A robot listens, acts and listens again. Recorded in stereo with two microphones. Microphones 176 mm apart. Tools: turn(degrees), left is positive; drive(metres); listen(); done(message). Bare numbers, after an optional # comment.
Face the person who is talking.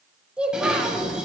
turn(-30)
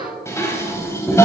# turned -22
listen()
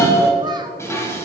listen()
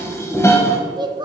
# So it is at 150° right.
turn(-150)
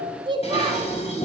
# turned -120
# The child speaking is now 30° right.
turn(-30)
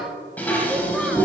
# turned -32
listen()
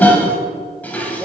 listen()
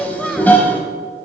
done("Found it: a child speaking, straight ahead.")